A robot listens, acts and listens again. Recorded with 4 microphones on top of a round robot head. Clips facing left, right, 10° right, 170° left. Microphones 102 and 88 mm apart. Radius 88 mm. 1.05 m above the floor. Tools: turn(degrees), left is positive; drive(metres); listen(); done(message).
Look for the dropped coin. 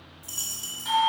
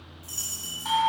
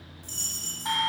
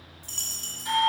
turn(degrees=155)
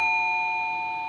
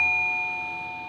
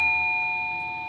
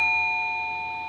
done("I heard a dropped coin from this way, but can't make it out now.")